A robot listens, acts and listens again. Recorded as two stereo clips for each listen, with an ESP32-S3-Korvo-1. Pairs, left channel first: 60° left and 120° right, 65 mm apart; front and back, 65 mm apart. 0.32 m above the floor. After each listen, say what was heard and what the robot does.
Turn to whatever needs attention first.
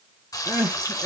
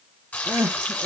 The crying: 175° right. Turn 175° right.
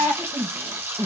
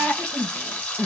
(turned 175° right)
The crying is now 50° left. Turn 50° left.
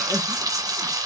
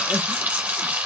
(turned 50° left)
Keep listening.
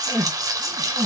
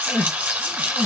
Found it: crying, straight ahead.